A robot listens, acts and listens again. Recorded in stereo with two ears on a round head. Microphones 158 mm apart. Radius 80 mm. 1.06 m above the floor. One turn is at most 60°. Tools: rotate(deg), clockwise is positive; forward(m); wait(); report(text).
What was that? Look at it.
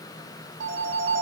rotate(60)
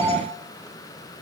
rotate(15)
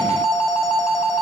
report("Found it: a phone ringing, straight ahead.")